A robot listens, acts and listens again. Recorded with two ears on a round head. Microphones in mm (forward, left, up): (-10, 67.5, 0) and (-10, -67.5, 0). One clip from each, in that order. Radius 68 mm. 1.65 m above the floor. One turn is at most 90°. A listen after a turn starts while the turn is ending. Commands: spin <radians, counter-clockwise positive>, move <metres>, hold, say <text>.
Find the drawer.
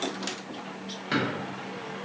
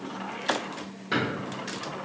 spin 0.61
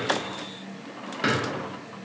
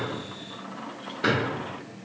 spin 1.57
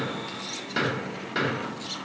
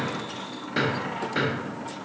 spin 0.35
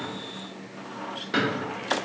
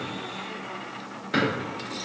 say Found it: a drawer, straight ahead.